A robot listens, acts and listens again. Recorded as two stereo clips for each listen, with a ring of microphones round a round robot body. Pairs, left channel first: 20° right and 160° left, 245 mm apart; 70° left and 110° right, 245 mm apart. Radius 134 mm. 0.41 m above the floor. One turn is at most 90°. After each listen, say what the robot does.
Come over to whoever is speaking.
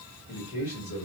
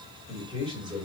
Turn 40° right.
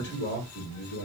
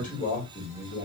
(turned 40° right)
Turn 15° left.
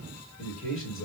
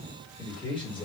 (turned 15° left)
Drive 1.0 m forward.
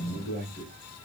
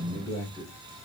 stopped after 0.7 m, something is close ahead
I am next to the man speaking.